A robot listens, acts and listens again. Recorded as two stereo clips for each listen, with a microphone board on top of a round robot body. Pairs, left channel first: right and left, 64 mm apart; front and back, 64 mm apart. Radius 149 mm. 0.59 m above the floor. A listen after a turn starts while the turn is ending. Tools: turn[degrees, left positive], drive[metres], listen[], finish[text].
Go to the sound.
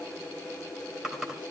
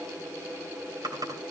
Thought: The typing on a keyboard: 170° left.
Action: turn[170]
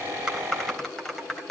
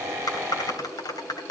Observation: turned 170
Action: drive[1.0]
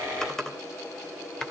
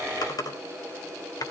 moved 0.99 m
Thought: The typing on a keyboard is now 10° right.
Action: turn[-10]
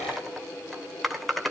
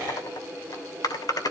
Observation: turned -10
Action: drive[1.0]
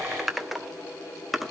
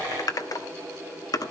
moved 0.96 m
Action: drive[1.0]
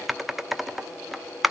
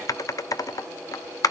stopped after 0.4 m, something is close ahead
Action: finish[I am next to the typing on a keyboard.]